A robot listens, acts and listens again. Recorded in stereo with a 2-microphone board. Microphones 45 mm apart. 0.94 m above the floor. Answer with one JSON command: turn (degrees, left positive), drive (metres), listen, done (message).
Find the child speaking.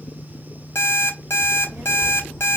{"turn": -90}
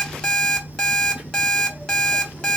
{"turn": -25}
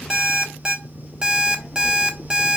{"turn": -15}
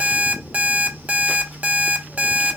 {"done": "Facing the child speaking, 2 to 4 m away."}